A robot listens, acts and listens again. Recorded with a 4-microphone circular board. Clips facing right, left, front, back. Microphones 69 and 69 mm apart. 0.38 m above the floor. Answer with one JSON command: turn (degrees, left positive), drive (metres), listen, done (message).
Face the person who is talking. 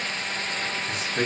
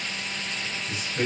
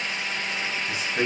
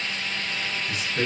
{"turn": -60}
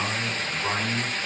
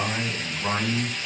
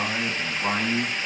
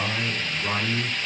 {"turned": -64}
{"turn": 15}
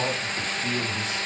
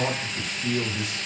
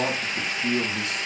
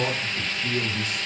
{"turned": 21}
{"turn": 10}
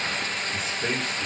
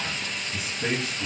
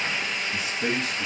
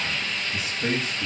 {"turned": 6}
{"turn": 15}
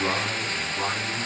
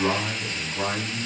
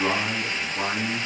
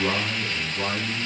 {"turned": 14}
{"done": "Found it: a man speaking, straight ahead."}